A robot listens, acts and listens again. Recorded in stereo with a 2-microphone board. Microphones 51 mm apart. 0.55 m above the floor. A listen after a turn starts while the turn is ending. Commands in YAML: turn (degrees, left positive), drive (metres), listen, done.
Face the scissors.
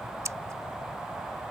turn: -90
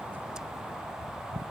listen: true
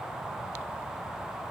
listen: true
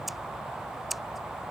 done: "Facing the scissors."